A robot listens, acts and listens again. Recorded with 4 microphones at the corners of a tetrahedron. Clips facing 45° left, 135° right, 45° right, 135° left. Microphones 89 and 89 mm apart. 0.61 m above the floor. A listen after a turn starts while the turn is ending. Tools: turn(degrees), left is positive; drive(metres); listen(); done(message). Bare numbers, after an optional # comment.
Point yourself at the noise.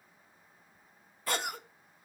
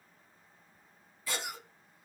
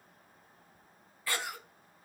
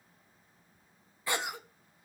# The cough: 70° left.
turn(70)
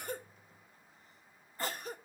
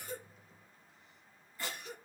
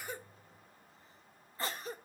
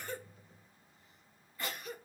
done("Found it: a cough, straight ahead.")